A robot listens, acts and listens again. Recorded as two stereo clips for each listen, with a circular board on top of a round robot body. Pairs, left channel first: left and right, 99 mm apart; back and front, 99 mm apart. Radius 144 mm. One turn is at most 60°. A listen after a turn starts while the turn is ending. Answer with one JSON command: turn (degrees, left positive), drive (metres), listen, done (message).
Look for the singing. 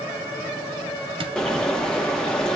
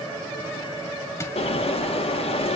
{"listen": true}
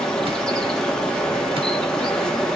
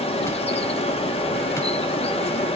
{"listen": true}
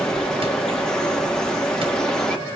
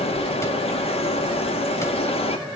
{"done": "I can't make out singing to turn to."}